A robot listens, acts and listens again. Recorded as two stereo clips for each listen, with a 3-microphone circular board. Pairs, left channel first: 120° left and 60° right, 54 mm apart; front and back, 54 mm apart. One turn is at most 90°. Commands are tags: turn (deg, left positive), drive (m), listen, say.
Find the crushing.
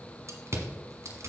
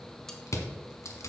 <turn deg="-25"/>
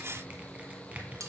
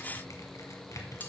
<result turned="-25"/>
<say>Facing the crushing, 1 to 2 m away.</say>